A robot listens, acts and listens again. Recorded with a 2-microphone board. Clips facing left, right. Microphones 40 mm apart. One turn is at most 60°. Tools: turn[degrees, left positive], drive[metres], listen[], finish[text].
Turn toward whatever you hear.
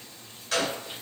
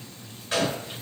Thought: The gunshot: about 25° right or 155° right.
Action: turn[-25]
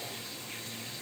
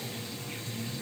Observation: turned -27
Action: listen[]
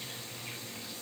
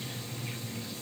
Action: finish[I heard a gunshot, but can't make it out now. It was about 5° left or 130° right.]